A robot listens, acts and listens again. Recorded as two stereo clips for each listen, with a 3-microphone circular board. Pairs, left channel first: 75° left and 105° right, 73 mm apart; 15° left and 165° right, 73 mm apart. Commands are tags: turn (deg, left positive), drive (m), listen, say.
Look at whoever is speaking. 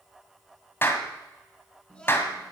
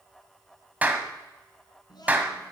<say>Found it: a child speaking, straight ahead, 2 to 4 m away.</say>